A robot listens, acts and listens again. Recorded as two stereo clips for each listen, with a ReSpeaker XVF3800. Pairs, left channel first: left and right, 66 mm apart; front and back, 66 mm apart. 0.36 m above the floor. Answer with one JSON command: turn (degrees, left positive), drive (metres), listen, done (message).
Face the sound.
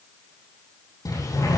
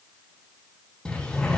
{"turn": 75}
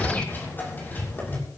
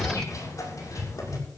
{"turn": 30}
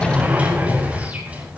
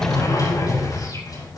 {"turn": -20}
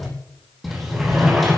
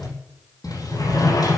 {"done": "Found it: a sliding door, straight ahead."}